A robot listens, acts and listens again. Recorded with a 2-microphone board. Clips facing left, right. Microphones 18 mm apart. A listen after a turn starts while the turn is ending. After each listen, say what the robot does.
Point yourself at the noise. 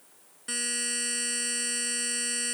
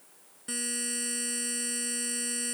Turn 15° left.
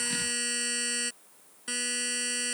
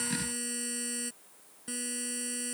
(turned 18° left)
Turn 145° left.
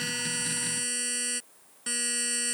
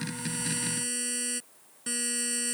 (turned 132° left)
Turn 15° left.
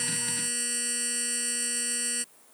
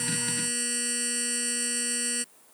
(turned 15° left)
Facing the buzzer.